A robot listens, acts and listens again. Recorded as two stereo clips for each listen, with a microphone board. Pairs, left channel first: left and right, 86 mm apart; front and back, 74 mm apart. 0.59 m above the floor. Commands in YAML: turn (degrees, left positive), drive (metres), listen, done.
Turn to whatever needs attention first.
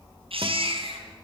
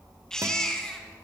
turn: -85
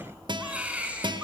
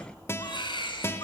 turn: -15
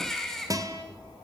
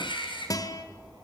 done: "Found it: a baby crying, straight ahead."